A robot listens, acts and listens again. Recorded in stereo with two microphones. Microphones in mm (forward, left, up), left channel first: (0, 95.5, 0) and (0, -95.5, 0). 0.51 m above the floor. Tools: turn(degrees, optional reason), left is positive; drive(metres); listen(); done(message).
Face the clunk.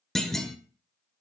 turn(degrees=30)
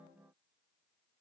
listen()
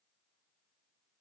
done("I heard a clunk, but can't make it out now. It was about 30° right or 150° left.")